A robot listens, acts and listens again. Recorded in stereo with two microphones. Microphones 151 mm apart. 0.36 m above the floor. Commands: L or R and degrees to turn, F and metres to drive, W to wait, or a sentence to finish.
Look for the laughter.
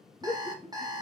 L40
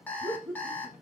L15
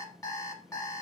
W
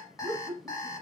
Found it: laughter, straight ahead, 1 to 2 m away.